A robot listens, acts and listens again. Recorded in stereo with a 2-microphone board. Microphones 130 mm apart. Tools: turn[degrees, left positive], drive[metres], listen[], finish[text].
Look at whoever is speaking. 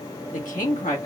Action: turn[90]
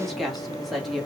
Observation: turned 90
Action: finish[Found it: a woman speaking, straight ahead.]